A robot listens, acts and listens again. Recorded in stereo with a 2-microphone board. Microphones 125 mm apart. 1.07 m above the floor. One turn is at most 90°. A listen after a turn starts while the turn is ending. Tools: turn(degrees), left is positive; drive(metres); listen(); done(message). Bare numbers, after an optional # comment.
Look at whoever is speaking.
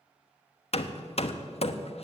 listen()
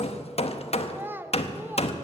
# The child speaking: about 20° right or 160° right.
turn(-20)
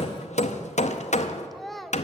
done("Facing the child speaking, under 1 m away.")